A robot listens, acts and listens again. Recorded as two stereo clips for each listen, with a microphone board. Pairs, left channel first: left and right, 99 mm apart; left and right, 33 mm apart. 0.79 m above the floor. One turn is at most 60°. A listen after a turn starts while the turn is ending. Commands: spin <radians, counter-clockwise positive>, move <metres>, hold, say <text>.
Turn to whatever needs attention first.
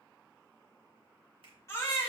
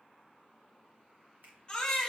spin 0.52
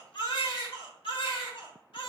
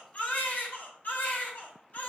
spin 1.05
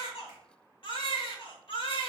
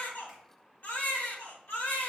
spin 1.05
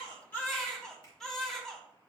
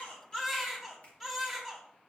say Found it: a baby crying, straight ahead, 1 to 2 m away.